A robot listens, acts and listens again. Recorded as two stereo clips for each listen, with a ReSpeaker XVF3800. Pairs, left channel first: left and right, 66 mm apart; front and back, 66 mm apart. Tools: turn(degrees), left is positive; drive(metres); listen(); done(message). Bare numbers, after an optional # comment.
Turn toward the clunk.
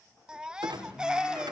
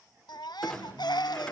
# The clunk: 80° right.
turn(-80)
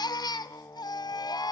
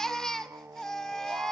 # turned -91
# Nothing new. It was at 10° left.
turn(10)
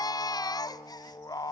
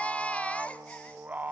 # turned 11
done("Facing where the clunk came from. I can't hear it now.")